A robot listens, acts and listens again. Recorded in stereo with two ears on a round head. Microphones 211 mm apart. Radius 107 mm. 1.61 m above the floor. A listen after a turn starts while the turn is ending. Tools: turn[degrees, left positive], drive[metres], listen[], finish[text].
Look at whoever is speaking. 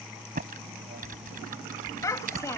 Action: turn[30]
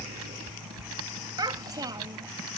Thought: So it is at 15° right.
Action: turn[-15]
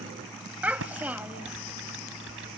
Action: finish[Facing the child speaking.]